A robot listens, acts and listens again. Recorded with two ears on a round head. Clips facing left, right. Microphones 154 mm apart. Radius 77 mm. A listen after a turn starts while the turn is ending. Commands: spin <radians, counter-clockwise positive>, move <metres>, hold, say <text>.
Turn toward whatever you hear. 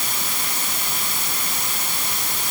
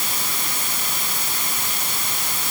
hold
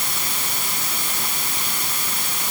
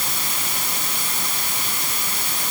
hold
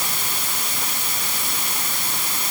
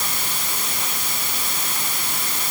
say I can't make out anything to turn to.